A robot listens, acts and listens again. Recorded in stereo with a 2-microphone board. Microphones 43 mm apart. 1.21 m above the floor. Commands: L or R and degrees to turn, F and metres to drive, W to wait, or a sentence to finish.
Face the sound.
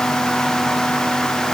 W
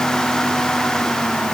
W
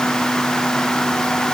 I can't make out anything.